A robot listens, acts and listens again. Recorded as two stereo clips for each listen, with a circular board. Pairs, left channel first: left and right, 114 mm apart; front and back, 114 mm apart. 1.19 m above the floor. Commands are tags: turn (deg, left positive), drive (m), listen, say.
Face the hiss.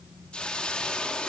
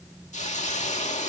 <turn deg="10"/>
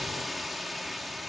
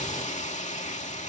<say>Found it: a hiss, straight ahead.</say>